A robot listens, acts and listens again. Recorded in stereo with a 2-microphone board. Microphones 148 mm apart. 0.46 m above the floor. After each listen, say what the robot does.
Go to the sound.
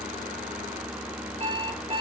Turn 40° right.
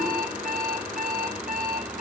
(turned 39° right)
Turn 100° right.
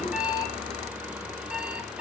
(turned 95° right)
Drive 1.0 m forward.
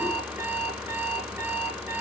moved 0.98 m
Turn 15° right.
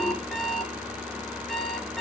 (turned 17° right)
Drive 1.0 m forward.
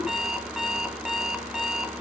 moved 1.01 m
Drive 1.0 m forward.
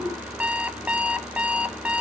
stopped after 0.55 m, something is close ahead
Turn 10° right.
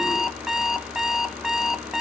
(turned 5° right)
Arrived at the alarm clock, straight ahead.